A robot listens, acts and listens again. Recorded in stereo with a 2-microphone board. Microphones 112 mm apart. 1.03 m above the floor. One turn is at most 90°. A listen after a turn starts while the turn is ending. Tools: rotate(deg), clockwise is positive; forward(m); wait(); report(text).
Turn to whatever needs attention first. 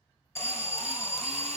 rotate(-25)
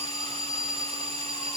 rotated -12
rotate(-90)
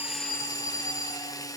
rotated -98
rotate(-45)
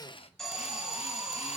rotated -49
report("Facing the alarm.")